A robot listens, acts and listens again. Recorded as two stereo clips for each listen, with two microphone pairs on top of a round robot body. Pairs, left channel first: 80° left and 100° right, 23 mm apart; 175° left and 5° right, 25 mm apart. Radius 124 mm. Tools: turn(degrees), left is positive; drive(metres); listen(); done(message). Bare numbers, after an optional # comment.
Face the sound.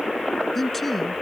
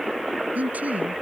# The man speaking: 10° right.
turn(-10)
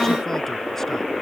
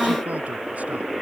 listen()
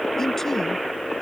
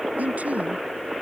done("Found it: a man speaking, straight ahead.")